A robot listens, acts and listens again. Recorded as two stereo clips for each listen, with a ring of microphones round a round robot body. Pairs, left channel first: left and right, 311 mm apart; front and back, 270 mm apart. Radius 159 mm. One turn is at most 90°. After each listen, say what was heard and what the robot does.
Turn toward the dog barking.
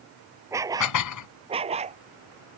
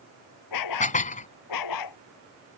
The dog barking: 20° right. Turn 20° right.
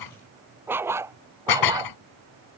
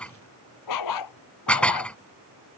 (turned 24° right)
The dog barking is now 10° right. Turn 10° right.
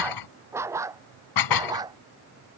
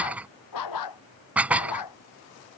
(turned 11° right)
The dog barking is now 10° right. Turn 10° right.
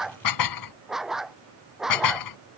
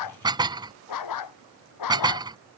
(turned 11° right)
Found it: a dog barking, straight ahead.